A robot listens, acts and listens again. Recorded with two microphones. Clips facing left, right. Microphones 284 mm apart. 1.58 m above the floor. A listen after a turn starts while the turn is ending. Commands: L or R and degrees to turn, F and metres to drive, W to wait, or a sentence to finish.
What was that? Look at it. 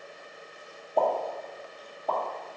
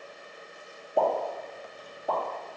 R30
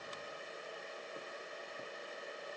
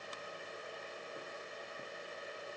W
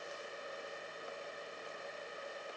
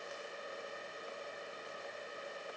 I heard a pop, but can't make it out now. It was about 20° left or 140° right.